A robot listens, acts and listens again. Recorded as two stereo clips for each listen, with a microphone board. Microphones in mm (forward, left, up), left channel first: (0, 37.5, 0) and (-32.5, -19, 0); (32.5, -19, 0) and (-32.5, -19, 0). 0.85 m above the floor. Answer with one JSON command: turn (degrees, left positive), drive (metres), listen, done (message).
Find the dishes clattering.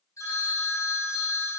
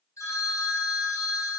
{"listen": true}
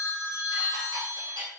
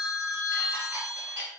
{"turn": -120}
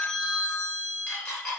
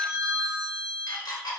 {"turn": -10}
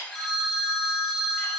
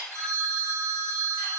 {"listen": true}
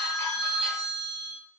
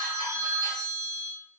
{"listen": true}
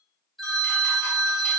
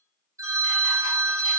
{"done": "Facing where the dishes clattering came from. I can't hear it now."}